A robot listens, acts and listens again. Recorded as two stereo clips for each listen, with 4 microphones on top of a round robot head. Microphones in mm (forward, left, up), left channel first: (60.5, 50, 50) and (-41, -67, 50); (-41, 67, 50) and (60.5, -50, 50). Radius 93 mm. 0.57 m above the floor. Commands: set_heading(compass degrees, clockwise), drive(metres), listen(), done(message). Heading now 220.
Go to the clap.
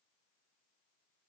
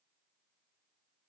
listen()
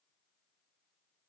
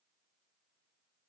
listen()
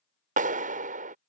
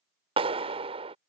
set_heading(320)
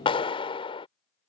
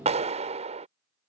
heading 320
drive(1.0)
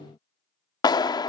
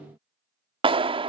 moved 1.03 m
drive(1.0)
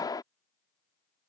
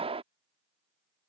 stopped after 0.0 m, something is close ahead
set_heading(330)
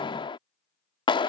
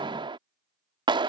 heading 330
done("Arrived at the clap, straight ahead.")